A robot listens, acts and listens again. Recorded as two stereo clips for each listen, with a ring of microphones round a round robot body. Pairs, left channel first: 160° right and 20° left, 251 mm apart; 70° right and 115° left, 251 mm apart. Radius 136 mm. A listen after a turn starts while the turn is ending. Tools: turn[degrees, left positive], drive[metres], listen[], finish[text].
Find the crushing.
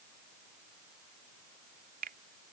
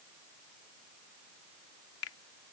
Action: listen[]
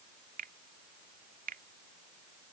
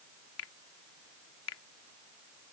Action: listen[]
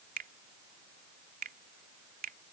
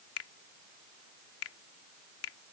Action: finish[I can't make out crushing, only a finger snap.]